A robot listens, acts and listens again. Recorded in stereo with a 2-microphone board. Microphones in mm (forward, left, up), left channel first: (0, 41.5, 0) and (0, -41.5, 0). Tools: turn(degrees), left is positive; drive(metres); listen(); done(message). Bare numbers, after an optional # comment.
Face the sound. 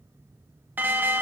# The alarm: about 25° right or 155° right.
turn(-25)
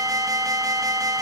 # So it is at 130° right.
turn(-130)
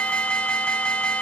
# The alarm is now 15° left.
turn(15)
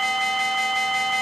done("Facing the alarm.")